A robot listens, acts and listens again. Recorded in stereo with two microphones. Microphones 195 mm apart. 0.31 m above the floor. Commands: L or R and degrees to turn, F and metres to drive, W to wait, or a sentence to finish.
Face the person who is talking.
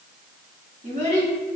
R40
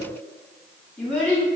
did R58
L10
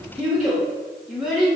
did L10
Facing the child speaking.